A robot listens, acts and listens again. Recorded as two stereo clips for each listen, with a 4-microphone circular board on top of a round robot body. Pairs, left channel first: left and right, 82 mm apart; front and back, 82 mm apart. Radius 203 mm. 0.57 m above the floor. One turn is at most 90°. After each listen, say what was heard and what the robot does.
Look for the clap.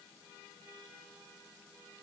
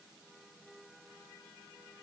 Keep listening.
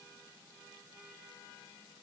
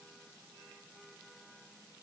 Keep listening.
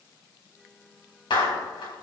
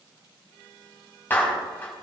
The clap: 65° left. Turn 65° left.
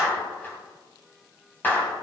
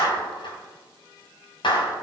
The clap is now 20° left. Turn 20° left.
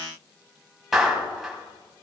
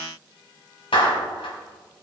Facing the clap, 2 to 4 m away.